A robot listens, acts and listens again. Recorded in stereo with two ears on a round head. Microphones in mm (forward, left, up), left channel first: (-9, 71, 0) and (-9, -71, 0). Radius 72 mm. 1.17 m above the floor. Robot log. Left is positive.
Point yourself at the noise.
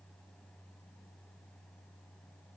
cmd idle
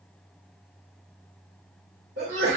note: The sneeze: about 55° right or 125° right.
cmd yaw -55
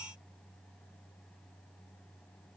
cmd idle
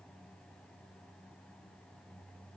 end: I heard a sneeze, but can't make it out now. It was about straight ahead or 70° right.